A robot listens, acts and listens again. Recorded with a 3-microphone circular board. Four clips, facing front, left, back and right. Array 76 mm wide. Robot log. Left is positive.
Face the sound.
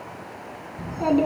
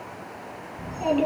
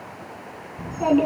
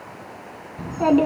note: The child speaking: 85° right.
cmd yaw -85
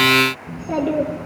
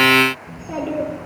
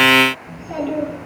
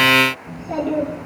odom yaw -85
end: Facing the child speaking.